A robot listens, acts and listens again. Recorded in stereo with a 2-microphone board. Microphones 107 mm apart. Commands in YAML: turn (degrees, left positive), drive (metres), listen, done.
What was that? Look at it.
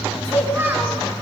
turn: -20
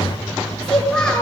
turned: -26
turn: 10
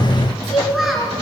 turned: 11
done: "Found it: a child speaking, straight ahead."